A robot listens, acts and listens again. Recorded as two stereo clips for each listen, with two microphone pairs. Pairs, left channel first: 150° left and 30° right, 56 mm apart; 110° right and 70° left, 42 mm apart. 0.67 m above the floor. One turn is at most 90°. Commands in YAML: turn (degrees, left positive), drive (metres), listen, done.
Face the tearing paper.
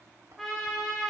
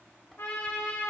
listen: true
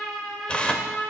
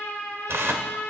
turn: 80
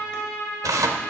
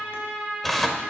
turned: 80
turn: -25
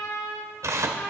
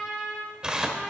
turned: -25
done: "Found it: tearing paper, straight ahead."